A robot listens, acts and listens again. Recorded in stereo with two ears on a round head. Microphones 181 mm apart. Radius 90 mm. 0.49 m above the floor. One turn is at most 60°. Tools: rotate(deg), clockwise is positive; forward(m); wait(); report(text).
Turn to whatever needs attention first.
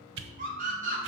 rotate(45)
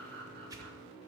wait()
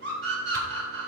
rotate(60)
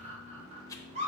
rotate(45)
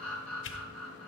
report("Facing the scream, 2 to 4 m away.")